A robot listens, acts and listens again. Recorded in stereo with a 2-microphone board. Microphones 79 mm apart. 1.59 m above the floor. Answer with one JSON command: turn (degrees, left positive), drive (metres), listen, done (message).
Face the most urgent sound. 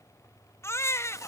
{"turn": 35}
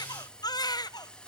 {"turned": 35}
{"turn": 105}
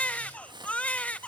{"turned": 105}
{"turn": 20}
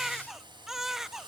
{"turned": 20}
{"done": "Facing the baby crying, under 1 m away."}